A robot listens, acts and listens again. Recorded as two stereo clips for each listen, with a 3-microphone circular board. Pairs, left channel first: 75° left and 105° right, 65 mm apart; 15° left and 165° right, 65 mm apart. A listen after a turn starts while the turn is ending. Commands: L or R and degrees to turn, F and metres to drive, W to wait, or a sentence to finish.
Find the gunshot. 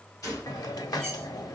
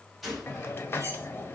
L105
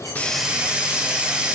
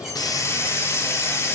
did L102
Facing where the gunshot came from. I can't hear it now.